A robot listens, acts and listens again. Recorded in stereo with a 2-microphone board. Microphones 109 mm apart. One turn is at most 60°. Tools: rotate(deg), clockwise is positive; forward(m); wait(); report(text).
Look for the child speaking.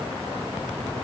wait()
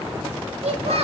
rotate(60)
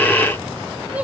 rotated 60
rotate(15)
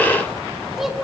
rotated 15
report("Facing the child speaking.")